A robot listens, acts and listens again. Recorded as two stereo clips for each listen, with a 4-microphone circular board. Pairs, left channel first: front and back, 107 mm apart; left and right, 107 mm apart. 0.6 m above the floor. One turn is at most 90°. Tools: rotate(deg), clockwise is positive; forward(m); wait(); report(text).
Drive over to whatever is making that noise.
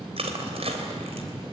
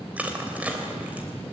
rotate(90)
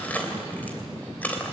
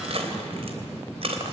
rotate(75)
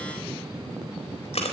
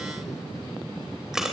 forward(1.0)
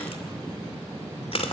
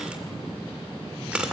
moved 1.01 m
rotate(10)
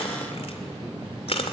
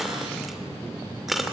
forward(1.0)
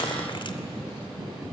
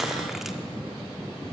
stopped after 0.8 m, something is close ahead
report("I am next to the crushing.")